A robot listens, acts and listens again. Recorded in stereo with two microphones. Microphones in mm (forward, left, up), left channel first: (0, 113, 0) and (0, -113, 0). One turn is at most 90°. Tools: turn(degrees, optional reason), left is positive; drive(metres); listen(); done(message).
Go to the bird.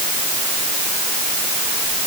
listen()
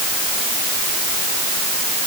listen()
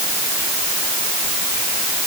done("I can't make out a bird.")